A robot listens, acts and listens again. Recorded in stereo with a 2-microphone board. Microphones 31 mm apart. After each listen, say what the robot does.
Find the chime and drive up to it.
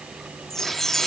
Turn 30° left.
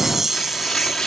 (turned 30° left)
Turn 15° right.
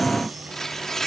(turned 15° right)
Keep listening.
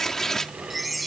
Drive 1.0 m forward.
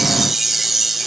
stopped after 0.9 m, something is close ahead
Turn 10° right.
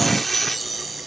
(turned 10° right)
Arrived at the chime, straight ahead.